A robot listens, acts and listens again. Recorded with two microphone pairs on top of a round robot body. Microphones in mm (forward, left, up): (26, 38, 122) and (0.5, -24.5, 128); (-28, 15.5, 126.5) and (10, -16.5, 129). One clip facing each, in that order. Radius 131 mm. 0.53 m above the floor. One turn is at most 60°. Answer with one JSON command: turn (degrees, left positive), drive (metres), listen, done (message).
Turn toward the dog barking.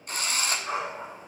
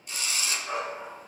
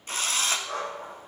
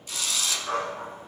{"done": "Found it: a dog barking, straight ahead."}